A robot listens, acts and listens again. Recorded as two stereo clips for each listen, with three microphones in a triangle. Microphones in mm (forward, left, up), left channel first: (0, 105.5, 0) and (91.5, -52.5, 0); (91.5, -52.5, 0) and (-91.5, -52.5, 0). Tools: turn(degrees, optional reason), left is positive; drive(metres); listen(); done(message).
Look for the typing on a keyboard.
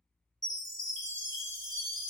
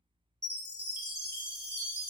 listen()
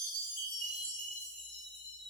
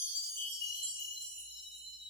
listen()
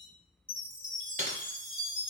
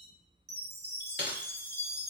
turn(degrees=-15, reason="The typing on a keyboard: 15° right.")
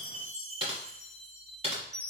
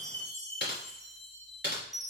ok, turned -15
done("Found it: typing on a keyboard, straight ahead.")